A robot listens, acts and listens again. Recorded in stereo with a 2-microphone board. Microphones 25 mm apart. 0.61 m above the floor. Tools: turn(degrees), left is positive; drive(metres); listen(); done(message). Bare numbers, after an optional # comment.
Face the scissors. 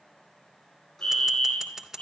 # The scissors: about 25° right or 155° right.
turn(-25)
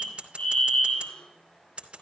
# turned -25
# So it is at 130° right.
turn(-130)
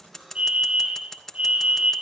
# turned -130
# The scissors is now 20° left.
turn(20)
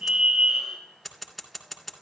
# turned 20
done("Facing the scissors.")